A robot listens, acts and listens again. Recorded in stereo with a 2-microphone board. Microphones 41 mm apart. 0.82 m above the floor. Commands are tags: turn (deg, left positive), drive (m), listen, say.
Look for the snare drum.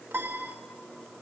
<listen/>
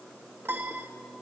<listen/>
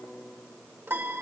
<say>I can't make out a snare drum, only a piano.</say>